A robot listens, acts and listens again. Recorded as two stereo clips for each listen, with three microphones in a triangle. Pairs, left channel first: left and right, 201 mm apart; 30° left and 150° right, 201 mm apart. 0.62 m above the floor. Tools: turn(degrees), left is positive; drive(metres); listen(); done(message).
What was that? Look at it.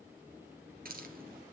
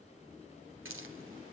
turn(degrees=-135)
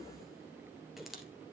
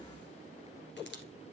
done("Found it: a hiss, straight ahead, 1 to 2 m away.")